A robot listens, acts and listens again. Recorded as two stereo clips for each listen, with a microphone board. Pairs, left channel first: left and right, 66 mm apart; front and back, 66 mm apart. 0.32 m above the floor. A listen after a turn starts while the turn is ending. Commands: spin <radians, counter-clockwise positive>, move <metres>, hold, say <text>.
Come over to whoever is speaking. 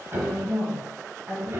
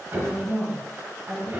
spin 3.14
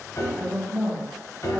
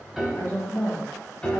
spin 0.35
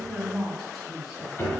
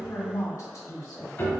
move 1.0
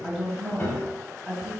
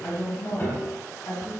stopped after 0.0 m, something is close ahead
say Blocked. The woman speaking is further on, straight ahead.